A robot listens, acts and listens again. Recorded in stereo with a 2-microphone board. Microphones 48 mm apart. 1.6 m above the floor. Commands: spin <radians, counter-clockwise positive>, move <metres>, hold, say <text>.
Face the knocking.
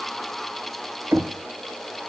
spin -1.05
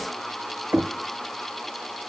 spin -0.96
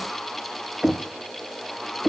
spin -0.17
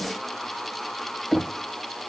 say Found it: knocking, straight ahead, under 1 m away.